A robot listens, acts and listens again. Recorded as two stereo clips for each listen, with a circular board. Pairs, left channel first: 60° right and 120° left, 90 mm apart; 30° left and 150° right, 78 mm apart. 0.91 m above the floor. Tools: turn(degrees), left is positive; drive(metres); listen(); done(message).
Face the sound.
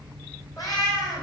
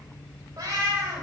turn(degrees=-100)
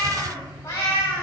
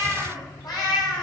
done("Found it: a cat meowing, straight ahead.")